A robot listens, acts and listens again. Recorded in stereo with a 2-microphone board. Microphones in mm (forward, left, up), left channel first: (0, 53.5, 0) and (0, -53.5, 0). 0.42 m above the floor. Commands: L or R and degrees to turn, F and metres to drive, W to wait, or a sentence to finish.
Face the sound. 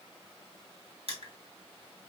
R65
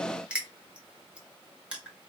R10
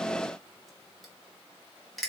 Found it: crushing, straight ahead.